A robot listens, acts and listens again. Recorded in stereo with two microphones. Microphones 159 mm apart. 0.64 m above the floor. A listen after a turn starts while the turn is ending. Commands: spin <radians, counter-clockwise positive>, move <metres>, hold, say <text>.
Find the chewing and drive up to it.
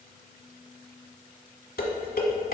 hold
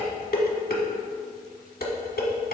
hold
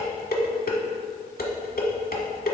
say I can't make out chewing to turn to.